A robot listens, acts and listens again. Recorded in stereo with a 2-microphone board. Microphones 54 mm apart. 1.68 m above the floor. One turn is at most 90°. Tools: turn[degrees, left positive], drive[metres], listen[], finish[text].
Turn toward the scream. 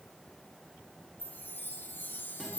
Action: listen[]
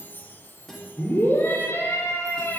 Thought: The scream: about 45° left or 135° left.
Action: turn[45]
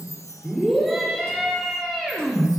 Action: finish[Found it: a scream, straight ahead, over 4 m away.]